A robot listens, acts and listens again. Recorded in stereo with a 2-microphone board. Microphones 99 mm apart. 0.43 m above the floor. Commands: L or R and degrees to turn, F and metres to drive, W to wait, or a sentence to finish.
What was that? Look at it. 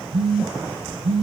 R90
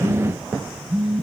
Facing the phone buzzing, 2 to 4 m away.